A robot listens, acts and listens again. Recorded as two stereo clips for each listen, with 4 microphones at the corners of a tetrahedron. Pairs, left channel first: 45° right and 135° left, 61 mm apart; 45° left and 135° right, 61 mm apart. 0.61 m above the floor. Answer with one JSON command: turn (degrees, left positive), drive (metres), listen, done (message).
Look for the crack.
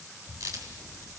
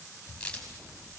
{"turn": 115}
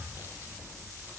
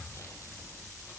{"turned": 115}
{"done": "Facing where the crack came from. I can't hear it now."}